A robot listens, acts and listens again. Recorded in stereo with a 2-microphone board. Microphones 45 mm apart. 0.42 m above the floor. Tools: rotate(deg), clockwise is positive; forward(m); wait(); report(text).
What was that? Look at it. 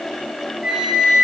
rotate(20)
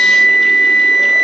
report("Found it: a flute, straight ahead.")